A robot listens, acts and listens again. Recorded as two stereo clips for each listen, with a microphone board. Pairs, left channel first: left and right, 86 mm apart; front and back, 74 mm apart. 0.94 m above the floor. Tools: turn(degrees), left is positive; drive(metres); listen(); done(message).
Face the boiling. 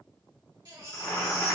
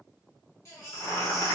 turn(degrees=40)
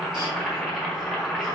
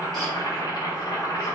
done("Facing the boiling, 1 to 2 m away.")